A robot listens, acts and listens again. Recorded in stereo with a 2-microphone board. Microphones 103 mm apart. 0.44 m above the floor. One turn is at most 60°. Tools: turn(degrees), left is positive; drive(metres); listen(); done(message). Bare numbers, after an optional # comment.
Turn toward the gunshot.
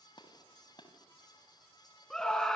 # The gunshot: about 50° left or 130° left.
turn(50)
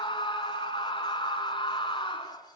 listen()
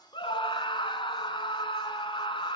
done("I heard a gunshot, but can't make it out now. It was about straight ahead or 80° left.")